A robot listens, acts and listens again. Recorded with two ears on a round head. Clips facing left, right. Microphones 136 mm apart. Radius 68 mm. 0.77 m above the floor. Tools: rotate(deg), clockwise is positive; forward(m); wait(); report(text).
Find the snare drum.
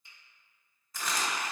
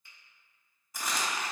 wait()
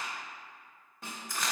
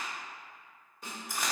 rotate(-50)
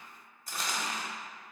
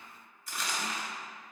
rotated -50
wait()
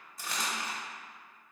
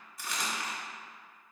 wait()
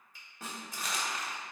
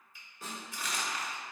rotate(-65)
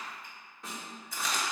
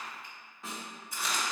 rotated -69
report("Found it: a snare drum, straight ahead, 1 to 2 m away.")